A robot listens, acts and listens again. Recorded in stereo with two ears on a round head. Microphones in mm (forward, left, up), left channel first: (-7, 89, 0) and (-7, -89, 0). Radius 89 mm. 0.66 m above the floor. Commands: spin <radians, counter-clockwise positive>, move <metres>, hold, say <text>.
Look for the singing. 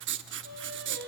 spin -0.87
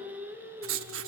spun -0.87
spin -0.17
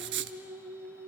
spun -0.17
spin -0.26
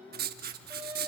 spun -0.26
spin -0.17
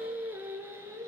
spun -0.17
spin -0.26
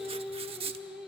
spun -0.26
say Found it: singing, straight ahead, 2 to 4 m away.